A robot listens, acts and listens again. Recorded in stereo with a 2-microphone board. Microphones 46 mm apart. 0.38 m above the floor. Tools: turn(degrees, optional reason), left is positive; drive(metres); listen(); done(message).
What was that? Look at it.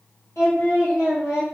turn(degrees=90)
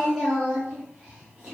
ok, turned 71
turn(degrees=-15, reason="So it is at 15° right.")
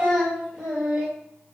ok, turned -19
turn(degrees=-15, reason="The singing is now 15° right.")
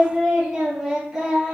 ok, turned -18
turn(degrees=-10, reason="The singing is now 10° right.")
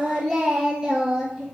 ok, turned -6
done("Facing the singing.")